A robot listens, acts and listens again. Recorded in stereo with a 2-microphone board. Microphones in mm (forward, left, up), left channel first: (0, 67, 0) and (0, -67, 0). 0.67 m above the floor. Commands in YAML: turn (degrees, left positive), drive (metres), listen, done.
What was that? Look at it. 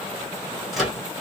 turn: 30
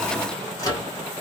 turn: 150
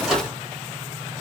done: "Facing the microwave, 1 to 2 m away."